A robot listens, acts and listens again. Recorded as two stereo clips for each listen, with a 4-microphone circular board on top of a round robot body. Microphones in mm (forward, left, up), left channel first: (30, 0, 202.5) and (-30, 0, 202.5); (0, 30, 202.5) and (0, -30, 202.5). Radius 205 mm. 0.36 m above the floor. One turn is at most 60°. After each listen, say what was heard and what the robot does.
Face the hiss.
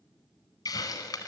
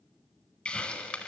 The hiss: 15° left. Turn 15° left.
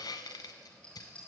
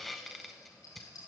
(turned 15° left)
Found it: a hiss, straight ahead, under 1 m away.